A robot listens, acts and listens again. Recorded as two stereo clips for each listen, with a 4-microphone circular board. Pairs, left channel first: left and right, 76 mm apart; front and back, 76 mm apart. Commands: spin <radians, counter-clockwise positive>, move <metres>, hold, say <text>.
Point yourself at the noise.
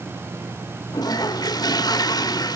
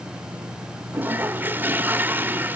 spin 2.01
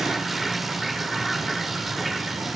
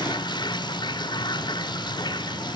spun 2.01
say Found it: a toilet flushing, straight ahead.